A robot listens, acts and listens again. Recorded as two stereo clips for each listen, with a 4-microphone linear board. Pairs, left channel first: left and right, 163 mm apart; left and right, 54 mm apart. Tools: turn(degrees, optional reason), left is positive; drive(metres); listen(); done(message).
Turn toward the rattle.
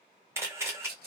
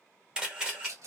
turn(degrees=-70, reason="The rattle: about 70° right or 110° right.")
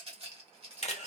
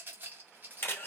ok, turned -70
turn(degrees=-35, reason="So it is at 35° right.")
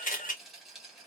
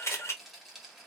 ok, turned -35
done("Facing the rattle.")